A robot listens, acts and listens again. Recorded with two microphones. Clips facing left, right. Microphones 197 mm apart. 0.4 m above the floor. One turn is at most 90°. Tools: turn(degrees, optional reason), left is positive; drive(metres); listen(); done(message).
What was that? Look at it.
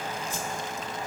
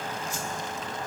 turn(degrees=60, reason="The whoosh: about 60° left or 120° left.")
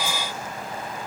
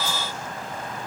listen()
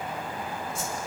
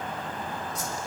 turn(degrees=35, reason="So it is at 35° left.")
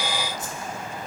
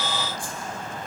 turn(degrees=30, reason="The whoosh is now 30° left.")
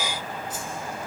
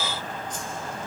turn(degrees=10, reason="The whoosh is now 10° left.")
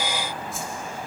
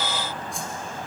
done("Found it: a whoosh, straight ahead, 2 to 4 m away.")